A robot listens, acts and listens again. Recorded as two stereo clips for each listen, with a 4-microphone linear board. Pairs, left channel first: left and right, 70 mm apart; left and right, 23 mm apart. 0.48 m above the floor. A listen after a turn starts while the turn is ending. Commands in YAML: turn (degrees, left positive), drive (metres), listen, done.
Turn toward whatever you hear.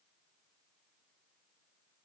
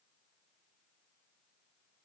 listen: true
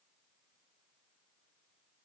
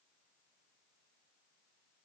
listen: true
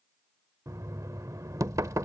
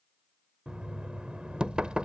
turn: -55
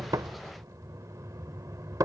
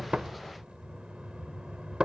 turn: -65
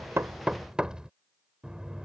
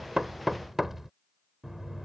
turn: -15
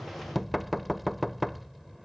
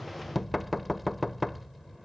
done: "Facing the knocking."